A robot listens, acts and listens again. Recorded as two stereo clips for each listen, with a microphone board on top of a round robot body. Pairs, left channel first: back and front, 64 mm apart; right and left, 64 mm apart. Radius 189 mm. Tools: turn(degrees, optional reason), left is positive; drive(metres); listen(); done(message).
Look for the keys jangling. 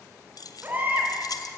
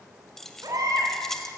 turn(degrees=-175, reason="The keys jangling: 175° right.")
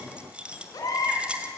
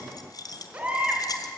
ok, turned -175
turn(degrees=-75, reason="The keys jangling is now 75° right.")
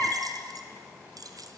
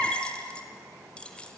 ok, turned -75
turn(degrees=-15, reason="The keys jangling is now 15° right.")
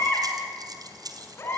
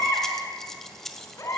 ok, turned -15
done("Facing the keys jangling, 1 to 2 m away.")